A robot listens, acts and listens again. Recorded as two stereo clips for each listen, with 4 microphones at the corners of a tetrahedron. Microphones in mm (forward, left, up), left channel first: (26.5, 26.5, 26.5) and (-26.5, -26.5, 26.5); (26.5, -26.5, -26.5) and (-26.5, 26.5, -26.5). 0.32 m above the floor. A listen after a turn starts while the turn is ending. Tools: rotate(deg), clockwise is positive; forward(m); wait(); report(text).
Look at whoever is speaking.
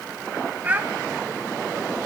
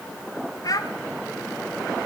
rotate(70)
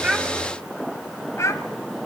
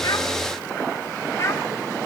report("Found it: a child speaking, straight ahead, 1 to 2 m away.")